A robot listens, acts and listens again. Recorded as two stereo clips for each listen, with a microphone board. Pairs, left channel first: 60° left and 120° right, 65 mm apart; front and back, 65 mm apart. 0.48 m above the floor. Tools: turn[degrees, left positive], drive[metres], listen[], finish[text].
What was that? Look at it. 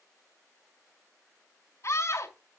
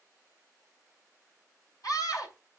Thought: The scream: 20° left.
Action: turn[20]
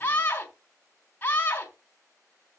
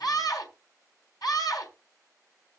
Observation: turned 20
Action: finish[Found it: a scream, straight ahead.]